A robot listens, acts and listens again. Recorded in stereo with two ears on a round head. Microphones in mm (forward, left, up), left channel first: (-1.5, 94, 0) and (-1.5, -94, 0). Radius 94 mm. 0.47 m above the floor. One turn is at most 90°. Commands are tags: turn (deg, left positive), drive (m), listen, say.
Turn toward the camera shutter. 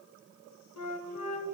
<listen/>
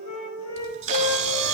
<turn deg="-35"/>
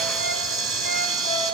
<say>Facing the camera shutter, 1 to 2 m away.</say>